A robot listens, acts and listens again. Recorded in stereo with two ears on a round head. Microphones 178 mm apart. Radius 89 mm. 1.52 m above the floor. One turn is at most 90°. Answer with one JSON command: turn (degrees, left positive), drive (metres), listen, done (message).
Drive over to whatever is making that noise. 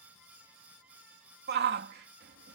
{"turn": -55}
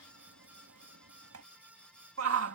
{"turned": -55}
{"turn": -75}
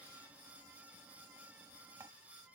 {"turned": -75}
{"listen": true}
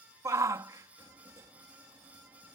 {"turn": -15}
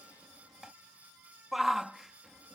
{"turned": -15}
{"drive": 1.0}
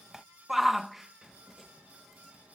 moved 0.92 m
{"drive": 1.0}
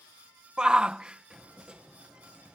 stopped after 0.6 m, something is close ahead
{"done": "I am next to the shout."}